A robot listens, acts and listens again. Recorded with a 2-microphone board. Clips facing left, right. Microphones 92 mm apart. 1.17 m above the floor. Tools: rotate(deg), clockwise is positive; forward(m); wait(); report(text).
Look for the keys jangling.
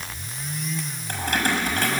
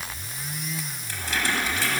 rotate(-50)
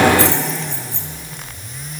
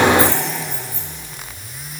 rotate(-85)
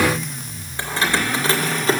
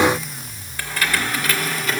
rotate(-35)
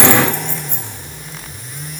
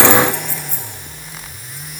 rotate(-20)
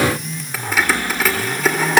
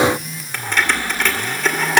report("Found it: keys jangling, straight ahead, 2 to 4 m away.")